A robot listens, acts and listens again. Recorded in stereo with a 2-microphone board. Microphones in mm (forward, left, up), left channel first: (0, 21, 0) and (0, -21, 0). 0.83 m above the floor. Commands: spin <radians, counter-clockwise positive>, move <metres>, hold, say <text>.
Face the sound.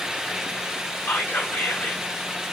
spin 1.05
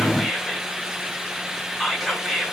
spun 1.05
say Found it: whispering, straight ahead.